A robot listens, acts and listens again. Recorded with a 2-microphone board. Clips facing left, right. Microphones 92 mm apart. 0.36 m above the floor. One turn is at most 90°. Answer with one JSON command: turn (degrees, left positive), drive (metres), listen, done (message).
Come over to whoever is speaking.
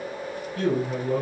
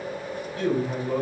{"turn": 45}
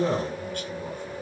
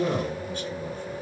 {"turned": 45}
{"turn": 85}
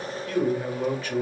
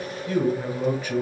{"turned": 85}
{"turn": -15}
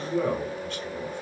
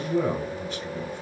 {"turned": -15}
{"drive": 1.0}
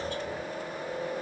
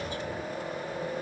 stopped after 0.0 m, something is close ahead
{"listen": true}
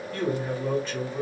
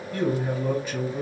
{"turn": -10}
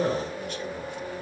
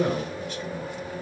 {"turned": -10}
{"done": "Blocked. The man speaking is further on, straight ahead."}